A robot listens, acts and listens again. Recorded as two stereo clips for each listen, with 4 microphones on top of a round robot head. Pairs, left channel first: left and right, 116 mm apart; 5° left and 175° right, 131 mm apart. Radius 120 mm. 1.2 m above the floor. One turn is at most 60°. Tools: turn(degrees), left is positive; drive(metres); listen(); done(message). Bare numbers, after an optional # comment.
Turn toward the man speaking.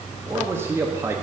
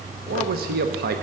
# The man speaking: 165° right.
turn(-60)
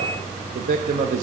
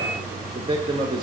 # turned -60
# The man speaking is now 110° right.
turn(-60)
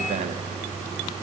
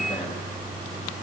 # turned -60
# Nothing new. It was at 50° right.
turn(-50)
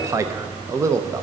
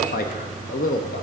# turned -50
# The man speaking is now 25° right.
turn(-25)
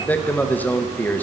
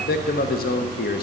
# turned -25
# The man speaking is now 10° left.
turn(10)
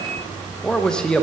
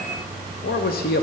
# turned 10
done("Found it: a man speaking, straight ahead, under 1 m away.")